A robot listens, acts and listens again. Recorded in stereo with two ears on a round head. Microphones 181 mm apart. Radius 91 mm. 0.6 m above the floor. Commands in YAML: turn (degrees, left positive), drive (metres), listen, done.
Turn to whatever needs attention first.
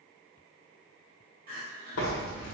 turn: -45
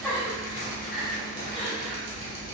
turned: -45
done: "Facing the crying."